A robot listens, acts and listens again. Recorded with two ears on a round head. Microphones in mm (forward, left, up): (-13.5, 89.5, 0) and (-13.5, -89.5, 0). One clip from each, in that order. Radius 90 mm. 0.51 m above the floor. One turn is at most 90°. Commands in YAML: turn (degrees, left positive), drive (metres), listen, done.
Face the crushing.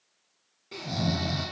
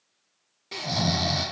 listen: true
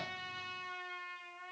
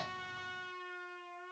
listen: true
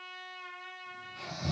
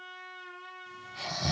done: "I can't make out crushing to turn to."